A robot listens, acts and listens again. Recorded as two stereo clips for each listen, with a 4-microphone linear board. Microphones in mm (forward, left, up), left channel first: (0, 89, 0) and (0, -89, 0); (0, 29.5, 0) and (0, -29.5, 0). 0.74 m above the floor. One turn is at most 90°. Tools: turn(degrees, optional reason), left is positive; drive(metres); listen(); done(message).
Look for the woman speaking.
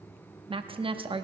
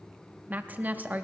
turn(degrees=-30, reason="The woman speaking: about 30° right or 150° right.")
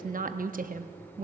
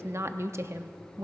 turn(degrees=-90, reason="So it is at 115° right.")
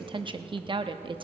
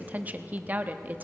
turn(degrees=-35, reason="The woman speaking is now 35° right.")
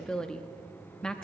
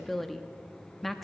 done("Facing the woman speaking, under 1 m away.")